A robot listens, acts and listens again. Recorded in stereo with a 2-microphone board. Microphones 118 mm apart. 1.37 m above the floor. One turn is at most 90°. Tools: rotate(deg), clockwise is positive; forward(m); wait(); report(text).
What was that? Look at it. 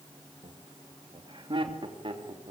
rotate(45)
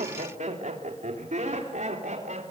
rotate(80)
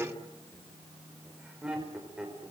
report("Facing the laughter.")